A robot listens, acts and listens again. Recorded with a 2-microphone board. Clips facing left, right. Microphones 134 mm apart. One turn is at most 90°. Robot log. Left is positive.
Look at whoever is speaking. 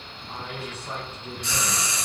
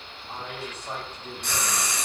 note: The man speaking: about 40° right or 140° right.
cmd yaw -40
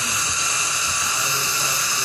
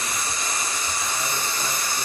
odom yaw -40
cmd idle
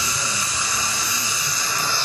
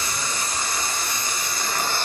cmd idle
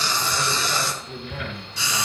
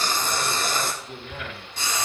end: Found it: a man speaking, straight ahead.